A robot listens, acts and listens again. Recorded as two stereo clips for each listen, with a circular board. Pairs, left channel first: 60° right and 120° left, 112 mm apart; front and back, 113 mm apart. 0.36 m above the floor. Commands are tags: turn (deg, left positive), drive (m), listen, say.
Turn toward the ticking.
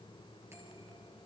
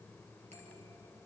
<listen/>
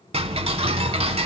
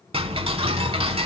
<turn deg="145"/>
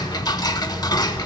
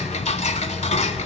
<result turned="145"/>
<say>Found it: ticking, straight ahead.</say>